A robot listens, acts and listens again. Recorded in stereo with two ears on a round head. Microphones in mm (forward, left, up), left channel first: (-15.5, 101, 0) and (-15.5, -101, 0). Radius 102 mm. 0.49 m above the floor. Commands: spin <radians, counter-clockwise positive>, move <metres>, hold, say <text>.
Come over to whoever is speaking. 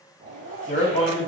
spin 0.52
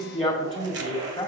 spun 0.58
move 1.0
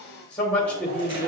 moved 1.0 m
spin 0.17
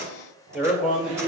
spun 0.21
move 1.0
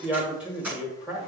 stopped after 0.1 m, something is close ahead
say I am next to the man speaking.